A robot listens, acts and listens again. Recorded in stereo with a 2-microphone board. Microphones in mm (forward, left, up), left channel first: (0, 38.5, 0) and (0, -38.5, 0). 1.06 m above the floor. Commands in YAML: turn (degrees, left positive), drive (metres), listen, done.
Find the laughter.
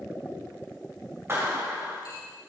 listen: true
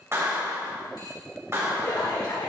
turn: 60
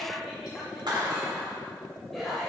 done: "Facing the laughter, over 4 m away."